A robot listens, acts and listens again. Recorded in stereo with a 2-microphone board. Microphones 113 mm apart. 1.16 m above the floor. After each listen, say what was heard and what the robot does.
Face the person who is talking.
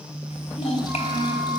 The child speaking: about 75° left or 105° left. Turn 75° left.
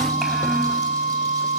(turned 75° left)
Keep listening.
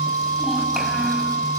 Keep listening.
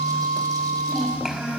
Found it: a child speaking, straight ahead, over 4 m away.